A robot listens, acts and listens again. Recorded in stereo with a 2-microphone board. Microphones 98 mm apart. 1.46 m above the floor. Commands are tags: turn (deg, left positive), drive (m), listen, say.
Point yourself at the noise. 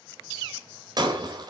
<turn deg="-45"/>
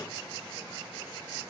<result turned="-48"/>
<listen/>
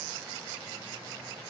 <say>I heard breaking glass, but can't make it out now. It was about 5° left or 85° right.</say>